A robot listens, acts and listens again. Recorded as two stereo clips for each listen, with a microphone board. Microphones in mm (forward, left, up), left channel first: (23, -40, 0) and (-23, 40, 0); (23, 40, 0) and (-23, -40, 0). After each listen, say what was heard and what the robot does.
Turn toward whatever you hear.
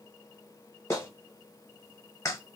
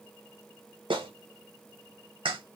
The clap: 115° right. Turn 115° right.
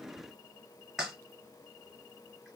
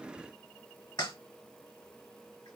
The clap is now 30° left. Turn 30° left.
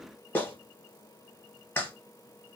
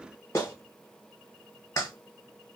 Found it: a clap, straight ahead, 1 to 2 m away.